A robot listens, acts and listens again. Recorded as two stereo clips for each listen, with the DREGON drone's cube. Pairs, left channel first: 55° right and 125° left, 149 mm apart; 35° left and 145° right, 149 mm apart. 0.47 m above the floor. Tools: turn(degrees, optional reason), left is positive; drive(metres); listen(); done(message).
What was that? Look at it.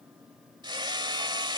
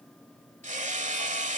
turn(degrees=180, reason="The hammering: straight behind.")
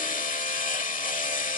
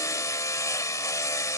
turn(degrees=-35, reason="The hammering is now 35° right.")
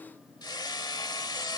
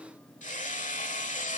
done("Found it: hammering, straight ahead.")